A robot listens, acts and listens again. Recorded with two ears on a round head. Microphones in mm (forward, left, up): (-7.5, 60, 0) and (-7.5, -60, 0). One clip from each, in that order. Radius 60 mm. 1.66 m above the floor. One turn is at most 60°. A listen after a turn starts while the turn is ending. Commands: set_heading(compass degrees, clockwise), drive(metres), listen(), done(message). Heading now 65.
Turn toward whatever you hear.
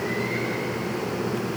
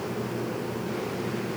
listen()
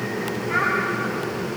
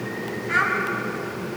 set_heading(105)
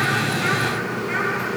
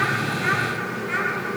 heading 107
done("Facing the child speaking.")